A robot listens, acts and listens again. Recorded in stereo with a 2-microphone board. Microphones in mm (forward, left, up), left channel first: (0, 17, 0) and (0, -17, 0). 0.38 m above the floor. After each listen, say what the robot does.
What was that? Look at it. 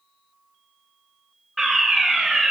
Turn 30° left.
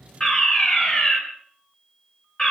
Turn 150° left.
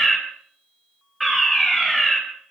Facing the fire alarm, 2 to 4 m away.